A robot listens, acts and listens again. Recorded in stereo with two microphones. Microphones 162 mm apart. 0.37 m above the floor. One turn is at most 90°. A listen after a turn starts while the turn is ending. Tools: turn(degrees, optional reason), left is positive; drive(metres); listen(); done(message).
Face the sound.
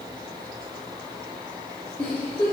turn(degrees=30)
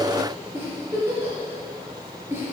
turn(degrees=-15, reason="So it is at 15° right.")
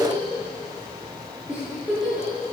done("Facing the giggle, 2 to 4 m away.")